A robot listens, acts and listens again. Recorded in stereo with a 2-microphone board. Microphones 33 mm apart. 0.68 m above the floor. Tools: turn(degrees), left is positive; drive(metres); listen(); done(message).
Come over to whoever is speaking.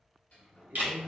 turn(degrees=-55)
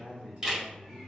turn(degrees=-55)
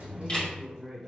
drive(metres=1.0)
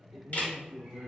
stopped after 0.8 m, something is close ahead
done("I am next to the man speaking.")